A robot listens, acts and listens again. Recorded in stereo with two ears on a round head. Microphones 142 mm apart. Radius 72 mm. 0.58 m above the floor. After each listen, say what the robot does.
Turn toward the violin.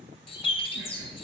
Keep listening.
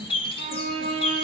Turn 40° right.
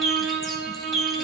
Turn 100° right.
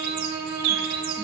Turn 15° right.
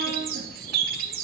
Keep listening.
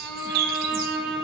Facing the violin.